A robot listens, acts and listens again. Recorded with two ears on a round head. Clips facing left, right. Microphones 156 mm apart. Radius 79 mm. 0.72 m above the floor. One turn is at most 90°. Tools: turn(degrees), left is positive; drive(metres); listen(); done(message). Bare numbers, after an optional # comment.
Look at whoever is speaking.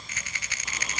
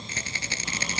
listen()
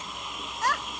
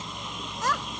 turn(-90)
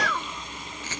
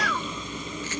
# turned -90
done("Facing the child speaking.")